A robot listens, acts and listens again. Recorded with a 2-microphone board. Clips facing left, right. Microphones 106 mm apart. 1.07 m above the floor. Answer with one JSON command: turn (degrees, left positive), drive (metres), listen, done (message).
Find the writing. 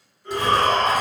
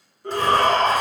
{"turn": 30}
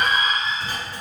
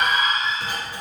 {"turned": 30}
{"turn": -15}
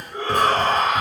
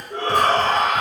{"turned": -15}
{"done": "Found it: writing, straight ahead, under 1 m away."}